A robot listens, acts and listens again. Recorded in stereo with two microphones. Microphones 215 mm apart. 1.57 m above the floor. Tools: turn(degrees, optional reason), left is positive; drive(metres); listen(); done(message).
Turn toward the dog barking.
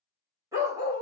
turn(degrees=-20, reason="The dog barking: about 20° right or 160° right.")
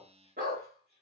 turn(degrees=-135, reason="So it is at 135° right.")
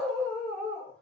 done("Facing the dog barking.")